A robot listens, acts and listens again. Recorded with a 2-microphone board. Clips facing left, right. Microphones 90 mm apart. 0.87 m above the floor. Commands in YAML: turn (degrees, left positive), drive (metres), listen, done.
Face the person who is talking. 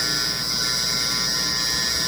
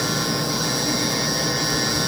listen: true
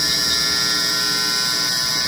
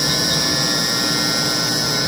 listen: true
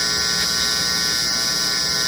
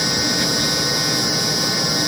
done: "I can't make out anyone speaking."